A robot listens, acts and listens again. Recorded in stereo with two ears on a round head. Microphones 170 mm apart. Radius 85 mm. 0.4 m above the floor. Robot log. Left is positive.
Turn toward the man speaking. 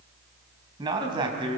note: The man speaking: about 30° right or 150° right.
cmd yaw -30
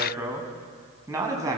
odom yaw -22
note: The man speaking: about 20° right or 160° right.
cmd yaw -20
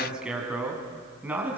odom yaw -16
cmd yaw -30
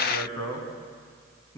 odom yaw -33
note: So it is at 15° left.
cmd yaw +15
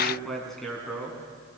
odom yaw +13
end: Found it: a man speaking, straight ahead, over 4 m away.